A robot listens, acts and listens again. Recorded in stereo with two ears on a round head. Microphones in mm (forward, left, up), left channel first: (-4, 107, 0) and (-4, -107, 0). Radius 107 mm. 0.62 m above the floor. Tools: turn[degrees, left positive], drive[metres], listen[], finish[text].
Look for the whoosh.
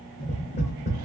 Action: listen[]
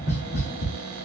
Action: listen[]
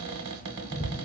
Action: finish[I can't make out a whoosh, only tapping and a cupboard door.]